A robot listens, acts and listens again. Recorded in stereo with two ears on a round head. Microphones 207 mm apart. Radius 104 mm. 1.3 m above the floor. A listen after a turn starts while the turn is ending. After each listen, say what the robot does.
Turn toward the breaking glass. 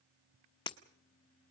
Turn 20° left.
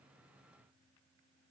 Keep listening.
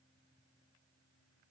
I heard breaking glass, but can't make it out now. It was about straight ahead or 140° left.